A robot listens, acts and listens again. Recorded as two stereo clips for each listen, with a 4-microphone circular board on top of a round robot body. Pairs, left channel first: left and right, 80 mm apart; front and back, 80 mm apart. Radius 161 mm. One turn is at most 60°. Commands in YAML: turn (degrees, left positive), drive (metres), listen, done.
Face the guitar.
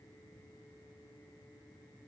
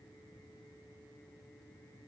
listen: true
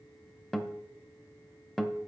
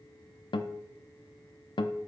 done: "Facing the guitar."